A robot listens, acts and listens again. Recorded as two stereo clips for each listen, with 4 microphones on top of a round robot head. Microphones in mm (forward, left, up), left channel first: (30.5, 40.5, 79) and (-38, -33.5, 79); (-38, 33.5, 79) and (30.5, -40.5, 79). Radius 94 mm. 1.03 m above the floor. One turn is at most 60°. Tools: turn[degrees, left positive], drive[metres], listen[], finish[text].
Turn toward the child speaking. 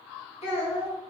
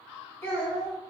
Thought: The child speaking: 60° left.
Action: turn[60]
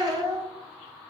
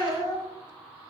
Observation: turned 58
Thought: The child speaking is now 10° right.
Action: turn[-10]
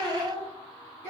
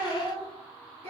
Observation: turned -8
Thought: The child speaking is now 20° right.
Action: turn[-20]
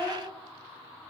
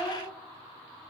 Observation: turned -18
Action: finish[Facing the child speaking, 1 to 2 m away.]